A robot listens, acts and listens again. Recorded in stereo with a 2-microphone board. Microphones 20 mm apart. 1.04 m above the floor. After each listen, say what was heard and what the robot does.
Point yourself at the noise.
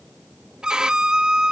The violin: about 40° right or 140° right. Turn 40° right.
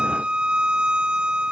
So it is at 95° right. Turn 95° right.
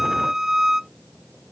The violin is now 25° right. Turn 25° right.
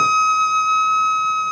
Facing the violin.